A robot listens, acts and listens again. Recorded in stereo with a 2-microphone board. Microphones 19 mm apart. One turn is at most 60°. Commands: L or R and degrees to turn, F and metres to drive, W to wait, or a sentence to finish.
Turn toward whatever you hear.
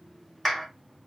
L30
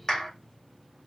L60
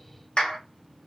L60
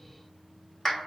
L15
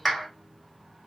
Found it: a clap, straight ahead, 1 to 2 m away.